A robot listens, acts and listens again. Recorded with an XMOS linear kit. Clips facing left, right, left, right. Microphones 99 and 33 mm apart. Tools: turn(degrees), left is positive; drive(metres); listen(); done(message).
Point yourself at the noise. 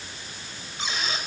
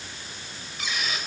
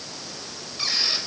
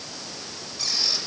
turn(degrees=30)
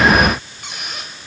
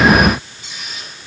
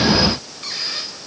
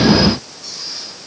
turn(degrees=120)
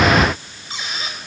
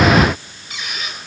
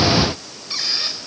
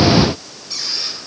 turn(degrees=35)
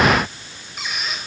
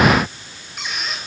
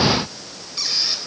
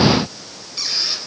done("Facing the squeak.")